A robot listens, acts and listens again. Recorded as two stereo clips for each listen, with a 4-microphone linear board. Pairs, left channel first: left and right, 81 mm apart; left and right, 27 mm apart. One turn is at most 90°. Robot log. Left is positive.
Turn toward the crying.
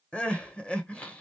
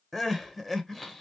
cmd yaw +30
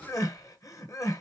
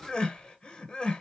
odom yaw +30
note: So it is at 140° left.
cmd yaw +90
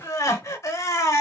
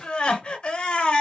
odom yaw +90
note: The crying is now 40° left.
cmd yaw +40
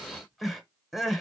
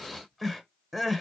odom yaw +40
end: Found it: crying, straight ahead, 1 to 2 m away.